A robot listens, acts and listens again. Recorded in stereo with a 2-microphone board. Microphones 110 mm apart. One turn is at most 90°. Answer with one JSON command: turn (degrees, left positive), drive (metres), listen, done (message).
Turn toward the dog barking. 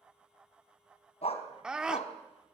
{"turn": 90}
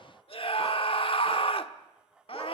{"listen": true}
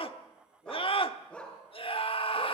{"turn": 10}
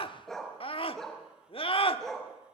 {"done": "Found it: a dog barking, straight ahead."}